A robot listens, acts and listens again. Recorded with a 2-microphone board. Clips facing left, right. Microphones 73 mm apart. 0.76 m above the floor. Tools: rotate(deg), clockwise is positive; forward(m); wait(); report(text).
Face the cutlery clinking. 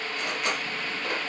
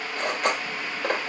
rotate(60)
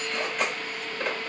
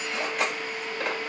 report("Facing the cutlery clinking.")